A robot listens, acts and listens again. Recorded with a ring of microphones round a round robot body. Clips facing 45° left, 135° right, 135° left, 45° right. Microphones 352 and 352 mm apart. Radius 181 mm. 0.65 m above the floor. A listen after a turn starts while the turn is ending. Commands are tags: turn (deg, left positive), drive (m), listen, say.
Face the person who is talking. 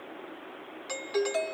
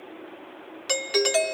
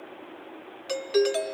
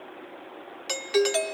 <listen/>
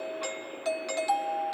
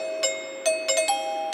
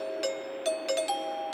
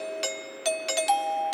<listen/>
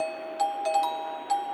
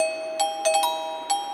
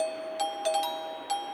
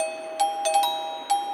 <say>I can't make out anyone speaking, only a doorbell.</say>